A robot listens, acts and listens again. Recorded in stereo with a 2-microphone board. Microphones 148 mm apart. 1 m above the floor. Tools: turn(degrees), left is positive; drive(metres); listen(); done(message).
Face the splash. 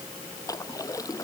turn(degrees=25)
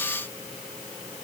listen()
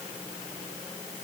done("I heard a splash, but can't make it out now. It was about straight ahead or 130° left.")